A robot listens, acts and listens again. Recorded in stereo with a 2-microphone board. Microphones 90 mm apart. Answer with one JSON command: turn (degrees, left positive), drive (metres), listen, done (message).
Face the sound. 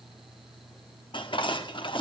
{"turn": 70}
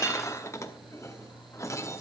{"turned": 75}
{"turn": 35}
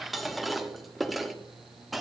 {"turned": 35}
{"done": "Facing the dishes clattering, under 1 m away."}